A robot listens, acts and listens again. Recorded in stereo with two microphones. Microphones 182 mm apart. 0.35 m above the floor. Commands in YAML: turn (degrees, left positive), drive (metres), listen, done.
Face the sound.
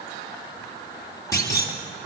turn: 20
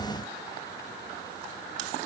listen: true
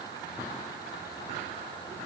done: "I heard a clunk, but can't make it out now. It was about straight ahead or 140° left."